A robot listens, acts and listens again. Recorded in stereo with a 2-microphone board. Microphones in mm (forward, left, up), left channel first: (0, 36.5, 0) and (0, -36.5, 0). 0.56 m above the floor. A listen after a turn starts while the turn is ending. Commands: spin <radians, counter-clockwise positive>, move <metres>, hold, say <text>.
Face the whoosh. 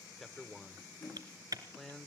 spin 1.13
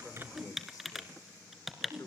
say Facing the whoosh, over 4 m away.